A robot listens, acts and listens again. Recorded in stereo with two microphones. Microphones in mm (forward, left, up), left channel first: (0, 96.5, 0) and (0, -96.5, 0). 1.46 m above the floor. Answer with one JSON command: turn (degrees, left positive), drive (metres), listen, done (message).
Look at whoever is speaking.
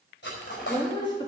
{"turn": 25}
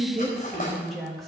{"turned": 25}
{"done": "Found it: a woman speaking, straight ahead, 2 to 4 m away."}